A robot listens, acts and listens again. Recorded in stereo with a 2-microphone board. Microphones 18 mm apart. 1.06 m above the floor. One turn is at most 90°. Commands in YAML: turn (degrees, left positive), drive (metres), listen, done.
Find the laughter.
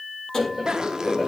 turn: -30
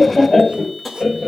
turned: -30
turn: 15
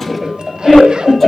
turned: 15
done: "Found it: laughter, straight ahead, over 4 m away."